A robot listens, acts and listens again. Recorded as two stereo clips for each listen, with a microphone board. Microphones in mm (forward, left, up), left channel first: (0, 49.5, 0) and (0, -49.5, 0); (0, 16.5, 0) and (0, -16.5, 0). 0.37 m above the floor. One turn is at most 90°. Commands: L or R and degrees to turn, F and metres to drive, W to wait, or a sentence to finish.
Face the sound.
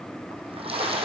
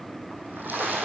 R70
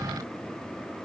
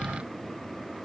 W
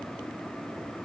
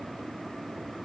I heard a splash, but can't make it out now. It was about straight ahead or 40° right.